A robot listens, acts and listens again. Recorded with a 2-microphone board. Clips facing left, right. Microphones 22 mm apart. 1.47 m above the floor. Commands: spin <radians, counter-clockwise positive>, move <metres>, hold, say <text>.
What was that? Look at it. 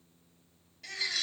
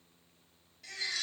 spin 0.35
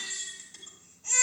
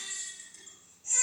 spin 2.53
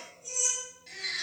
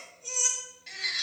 spin -0.44
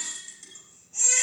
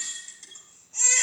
say Found it: a baby crying, straight ahead, over 4 m away.